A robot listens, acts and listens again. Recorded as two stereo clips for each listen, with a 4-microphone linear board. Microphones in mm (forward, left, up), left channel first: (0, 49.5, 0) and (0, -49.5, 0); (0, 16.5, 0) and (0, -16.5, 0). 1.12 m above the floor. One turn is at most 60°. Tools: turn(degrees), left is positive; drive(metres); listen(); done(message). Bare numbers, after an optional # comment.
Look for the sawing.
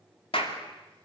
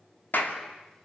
listen()
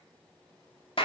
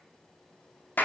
listen()
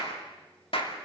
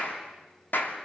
done("I can't make out sawing, only a clap.")